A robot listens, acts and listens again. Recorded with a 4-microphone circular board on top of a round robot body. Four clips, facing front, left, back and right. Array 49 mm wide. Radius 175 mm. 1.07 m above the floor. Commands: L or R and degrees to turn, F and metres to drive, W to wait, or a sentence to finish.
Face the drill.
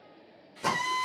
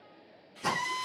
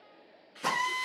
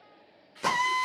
R105
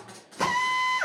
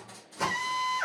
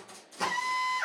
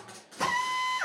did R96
R10
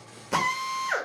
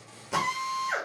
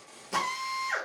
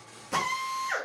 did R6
Facing the drill, 1 to 2 m away.